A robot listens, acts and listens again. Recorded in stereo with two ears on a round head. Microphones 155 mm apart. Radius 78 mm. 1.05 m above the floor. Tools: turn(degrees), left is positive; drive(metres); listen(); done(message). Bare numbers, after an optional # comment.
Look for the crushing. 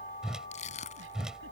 # The crushing: about 40° left or 140° left.
turn(40)
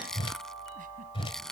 done("Found it: crushing, straight ahead.")